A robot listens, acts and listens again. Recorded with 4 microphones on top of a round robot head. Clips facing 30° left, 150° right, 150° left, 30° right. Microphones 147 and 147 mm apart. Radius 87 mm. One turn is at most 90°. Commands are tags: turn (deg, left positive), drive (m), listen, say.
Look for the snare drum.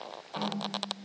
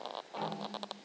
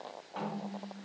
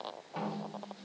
<turn deg="45"/>
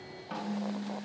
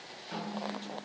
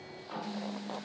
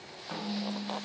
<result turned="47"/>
<say>Facing the snare drum, 2 to 4 m away.</say>